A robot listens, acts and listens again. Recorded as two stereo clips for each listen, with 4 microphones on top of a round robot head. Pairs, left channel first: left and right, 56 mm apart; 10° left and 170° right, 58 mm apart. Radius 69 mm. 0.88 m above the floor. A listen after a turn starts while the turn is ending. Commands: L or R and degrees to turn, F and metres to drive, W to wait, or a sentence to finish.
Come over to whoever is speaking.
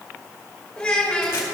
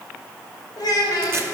L15
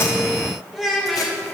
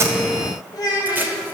F1.0
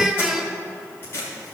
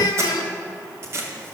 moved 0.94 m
R10
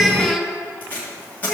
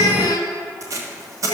F1.0
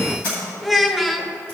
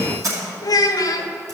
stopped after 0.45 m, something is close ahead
I am next to the child speaking.